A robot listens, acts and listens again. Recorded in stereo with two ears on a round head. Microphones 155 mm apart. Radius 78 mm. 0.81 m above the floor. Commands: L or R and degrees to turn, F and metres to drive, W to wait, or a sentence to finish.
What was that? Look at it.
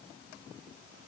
W
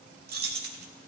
R60
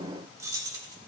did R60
R20
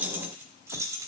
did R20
R20
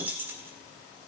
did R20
R15
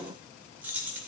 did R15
R10
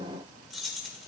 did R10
Facing the keys jangling.